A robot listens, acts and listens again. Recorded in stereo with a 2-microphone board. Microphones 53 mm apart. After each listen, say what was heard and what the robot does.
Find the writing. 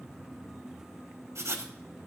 The writing: about 70° right or 110° right. Turn 70° right.
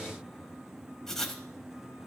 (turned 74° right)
Found it: writing, straight ahead, under 1 m away.